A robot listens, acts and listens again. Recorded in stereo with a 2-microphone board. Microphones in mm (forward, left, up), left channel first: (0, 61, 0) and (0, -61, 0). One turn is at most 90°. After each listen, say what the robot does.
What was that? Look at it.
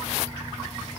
Keep listening.
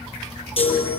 Turn 45° left.
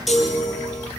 Found it: a chime, straight ahead, over 4 m away.